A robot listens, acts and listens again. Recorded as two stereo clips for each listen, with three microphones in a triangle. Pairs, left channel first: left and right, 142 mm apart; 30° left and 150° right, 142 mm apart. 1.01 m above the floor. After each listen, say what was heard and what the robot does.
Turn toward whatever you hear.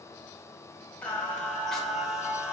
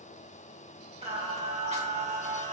The singing: 170° right. Turn 170° right.
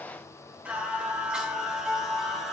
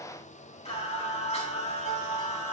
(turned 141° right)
Facing the singing, 2 to 4 m away.